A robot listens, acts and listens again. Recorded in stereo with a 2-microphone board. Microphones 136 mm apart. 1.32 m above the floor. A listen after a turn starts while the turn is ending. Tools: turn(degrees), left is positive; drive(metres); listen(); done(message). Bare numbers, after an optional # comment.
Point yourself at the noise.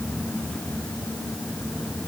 listen()
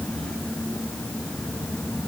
listen()
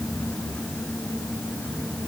done("I can't make out anything.")